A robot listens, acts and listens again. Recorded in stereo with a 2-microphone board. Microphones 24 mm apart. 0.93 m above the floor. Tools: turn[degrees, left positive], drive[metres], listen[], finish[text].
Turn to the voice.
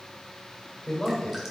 Thought: The man speaking: about 25° left or 155° left.
Action: turn[25]
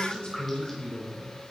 Thought: So it is at 130° left.
Action: turn[130]
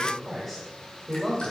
Action: finish[Facing the man speaking.]